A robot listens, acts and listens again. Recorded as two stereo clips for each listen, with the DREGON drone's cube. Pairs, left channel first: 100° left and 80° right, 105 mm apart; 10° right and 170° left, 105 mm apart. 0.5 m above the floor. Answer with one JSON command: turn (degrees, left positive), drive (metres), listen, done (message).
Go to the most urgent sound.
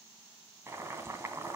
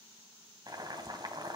{"listen": true}
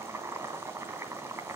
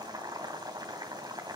{"listen": true}
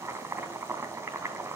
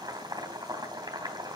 {"done": "I can't make out anything urgent to turn to."}